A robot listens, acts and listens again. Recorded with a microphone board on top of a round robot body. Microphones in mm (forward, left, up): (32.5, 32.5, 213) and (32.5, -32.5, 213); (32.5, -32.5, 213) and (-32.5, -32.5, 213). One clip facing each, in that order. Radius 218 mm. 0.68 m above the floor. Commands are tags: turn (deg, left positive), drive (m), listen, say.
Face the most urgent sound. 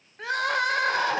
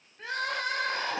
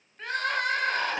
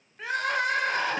<turn deg="95"/>
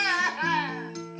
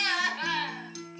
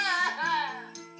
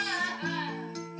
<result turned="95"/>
<turn deg="25"/>
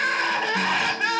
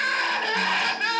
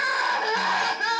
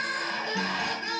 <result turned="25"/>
<say>Found it: crying, straight ahead.</say>